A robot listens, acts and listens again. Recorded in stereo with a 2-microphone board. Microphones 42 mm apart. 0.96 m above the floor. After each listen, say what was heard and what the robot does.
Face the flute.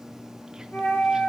The flute: about 60° left or 120° left. Turn 60° left.
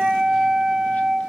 Facing the flute.